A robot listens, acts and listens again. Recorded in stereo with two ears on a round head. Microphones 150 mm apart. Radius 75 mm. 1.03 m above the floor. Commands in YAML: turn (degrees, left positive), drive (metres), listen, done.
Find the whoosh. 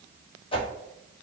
turn: 30
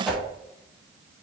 done: "Found it: a whoosh, straight ahead."